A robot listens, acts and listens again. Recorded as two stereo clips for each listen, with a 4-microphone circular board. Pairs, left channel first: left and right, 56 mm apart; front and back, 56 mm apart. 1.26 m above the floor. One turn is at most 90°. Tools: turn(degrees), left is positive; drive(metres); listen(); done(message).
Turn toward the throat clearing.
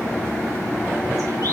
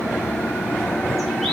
listen()
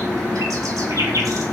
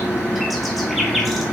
listen()
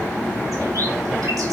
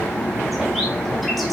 done("I can't make out throat clearing.")